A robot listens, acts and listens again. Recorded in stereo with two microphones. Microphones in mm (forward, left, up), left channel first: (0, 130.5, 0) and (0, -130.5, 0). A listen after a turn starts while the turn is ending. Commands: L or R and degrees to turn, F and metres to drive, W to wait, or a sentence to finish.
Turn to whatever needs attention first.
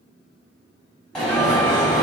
L30
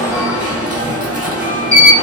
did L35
R30
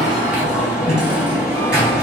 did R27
Facing the alarm, 2 to 4 m away.